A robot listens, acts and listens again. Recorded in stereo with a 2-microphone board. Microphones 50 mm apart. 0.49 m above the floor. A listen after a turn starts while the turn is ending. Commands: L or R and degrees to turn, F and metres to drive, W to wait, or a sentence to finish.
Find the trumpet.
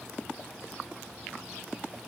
W
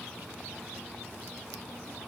W
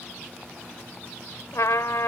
L90
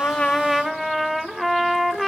Facing the trumpet.